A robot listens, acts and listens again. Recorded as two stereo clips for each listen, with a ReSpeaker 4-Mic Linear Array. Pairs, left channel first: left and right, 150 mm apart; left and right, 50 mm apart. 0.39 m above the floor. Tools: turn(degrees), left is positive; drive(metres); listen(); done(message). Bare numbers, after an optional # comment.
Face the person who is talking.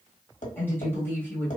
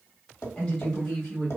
# The woman speaking: about 15° left or 165° left.
turn(15)
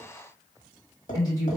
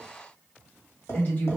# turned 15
# So it is at 155° left.
turn(155)
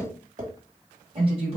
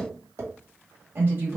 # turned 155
# The woman speaking is now 50° right.
turn(-50)
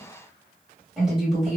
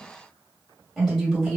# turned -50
done("Facing the woman speaking, 1 to 2 m away.")